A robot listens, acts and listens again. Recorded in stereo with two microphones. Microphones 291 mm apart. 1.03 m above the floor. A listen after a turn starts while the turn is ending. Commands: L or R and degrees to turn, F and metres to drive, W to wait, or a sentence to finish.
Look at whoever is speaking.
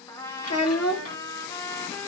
L55
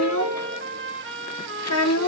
L65
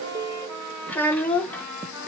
Found it: a child speaking, straight ahead.